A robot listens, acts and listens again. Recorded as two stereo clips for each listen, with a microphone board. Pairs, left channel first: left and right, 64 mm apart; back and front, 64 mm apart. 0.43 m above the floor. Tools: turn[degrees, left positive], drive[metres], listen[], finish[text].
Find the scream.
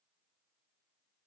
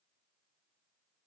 Action: listen[]
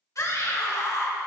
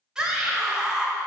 Thought: The scream: 75° left.
Action: turn[75]
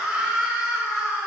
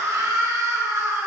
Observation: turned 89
Thought: The scream is now 15° right.
Action: turn[-15]
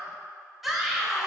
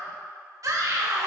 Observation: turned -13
Action: finish[Facing the scream.]